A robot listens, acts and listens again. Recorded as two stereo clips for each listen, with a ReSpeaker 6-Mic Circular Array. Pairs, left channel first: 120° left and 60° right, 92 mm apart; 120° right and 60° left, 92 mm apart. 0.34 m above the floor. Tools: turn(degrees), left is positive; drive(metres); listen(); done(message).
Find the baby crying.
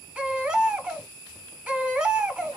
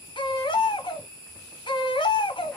turn(degrees=-135)
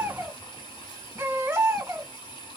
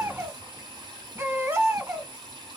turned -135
done("Found it: a baby crying, straight ahead, under 1 m away.")